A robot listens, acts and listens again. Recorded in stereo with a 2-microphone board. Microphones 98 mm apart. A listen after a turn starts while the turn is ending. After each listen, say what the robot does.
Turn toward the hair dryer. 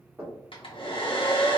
Turn 60° left.
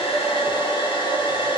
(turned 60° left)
Turn 60° left.
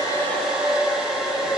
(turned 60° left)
Found it: a hair dryer, straight ahead.